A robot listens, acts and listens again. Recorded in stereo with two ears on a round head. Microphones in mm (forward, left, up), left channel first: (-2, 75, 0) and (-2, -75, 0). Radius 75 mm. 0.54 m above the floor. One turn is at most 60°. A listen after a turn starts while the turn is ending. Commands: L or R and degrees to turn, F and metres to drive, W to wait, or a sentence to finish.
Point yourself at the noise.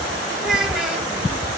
R30
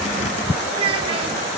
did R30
R60
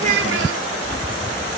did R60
R60
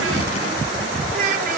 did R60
R50
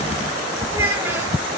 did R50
R15
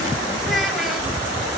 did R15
W
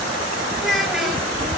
Facing the child speaking.